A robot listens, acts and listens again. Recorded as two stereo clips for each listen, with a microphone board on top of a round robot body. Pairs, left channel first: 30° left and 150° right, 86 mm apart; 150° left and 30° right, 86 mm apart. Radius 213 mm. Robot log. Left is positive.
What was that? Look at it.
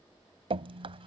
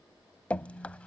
note: The dripping: 135° right.
cmd yaw -135
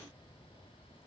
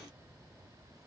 cmd idle
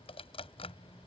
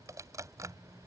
note: The dripping is now 25° left.
cmd yaw +25
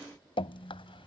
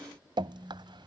end: Found it: dripping, straight ahead.